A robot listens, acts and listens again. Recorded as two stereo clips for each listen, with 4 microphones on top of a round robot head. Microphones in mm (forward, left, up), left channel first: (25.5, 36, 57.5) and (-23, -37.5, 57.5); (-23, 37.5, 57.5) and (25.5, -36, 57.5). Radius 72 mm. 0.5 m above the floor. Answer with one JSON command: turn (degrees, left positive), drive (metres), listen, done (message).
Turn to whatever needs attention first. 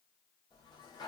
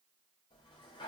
{"listen": true}
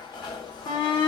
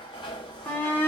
{"turn": 60}
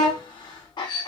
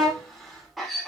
{"turn": 35}
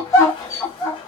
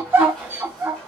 {"done": "Facing the shout."}